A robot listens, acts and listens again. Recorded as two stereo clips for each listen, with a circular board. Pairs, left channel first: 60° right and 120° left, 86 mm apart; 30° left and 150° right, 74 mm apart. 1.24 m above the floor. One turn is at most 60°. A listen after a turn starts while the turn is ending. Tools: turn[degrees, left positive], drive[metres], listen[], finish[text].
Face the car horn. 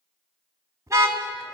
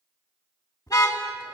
Thought: The car horn: 65° left.
Action: turn[60]
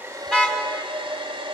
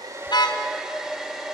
Action: listen[]
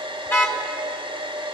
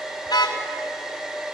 Action: finish[Facing the car horn.]